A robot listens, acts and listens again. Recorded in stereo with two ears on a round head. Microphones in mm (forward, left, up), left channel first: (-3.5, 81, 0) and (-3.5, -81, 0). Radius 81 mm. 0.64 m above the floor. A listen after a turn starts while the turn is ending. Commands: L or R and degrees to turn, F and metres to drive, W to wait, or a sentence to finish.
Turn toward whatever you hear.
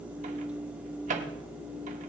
R40
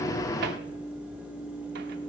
W
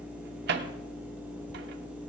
R90
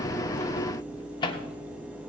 L30
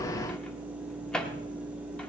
Found it: a microwave, straight ahead.